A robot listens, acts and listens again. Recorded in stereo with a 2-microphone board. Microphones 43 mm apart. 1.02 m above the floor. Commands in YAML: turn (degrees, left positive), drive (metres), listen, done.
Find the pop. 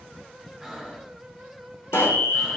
turn: 70
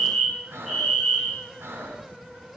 listen: true
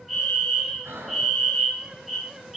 done: "I heard a pop, but can't make it out now. It was about straight ahead or 40° left."